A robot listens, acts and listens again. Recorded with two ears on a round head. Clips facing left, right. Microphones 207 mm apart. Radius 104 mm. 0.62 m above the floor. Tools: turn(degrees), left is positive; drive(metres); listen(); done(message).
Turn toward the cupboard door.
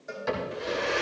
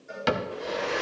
turn(degrees=-90)
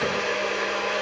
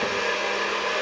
listen()
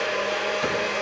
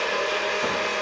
listen()
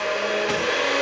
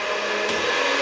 done("Facing where the cupboard door came from. I can't hear it now.")